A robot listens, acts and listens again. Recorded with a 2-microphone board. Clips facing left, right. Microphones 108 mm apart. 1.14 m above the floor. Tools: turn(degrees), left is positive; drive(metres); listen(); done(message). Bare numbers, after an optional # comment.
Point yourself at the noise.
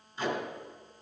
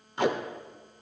# The tape being pulled: about 70° right or 110° right.
turn(-70)
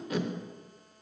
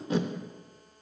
# So it is at 30° right.
turn(-30)
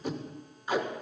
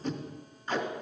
# The tape being pulled is now 10° left.
turn(10)
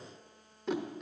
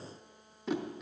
done("Found it: tape being pulled, straight ahead.")